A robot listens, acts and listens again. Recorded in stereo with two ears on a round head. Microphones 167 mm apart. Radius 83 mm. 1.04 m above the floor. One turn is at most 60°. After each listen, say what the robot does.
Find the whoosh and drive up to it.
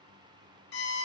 Keep listening.
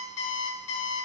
Keep listening.
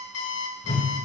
Turn 35° left.
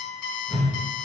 Drive 1.0 m forward.
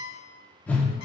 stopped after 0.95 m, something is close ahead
Turn 10° left.
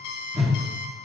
Arrived at the whoosh, straight ahead.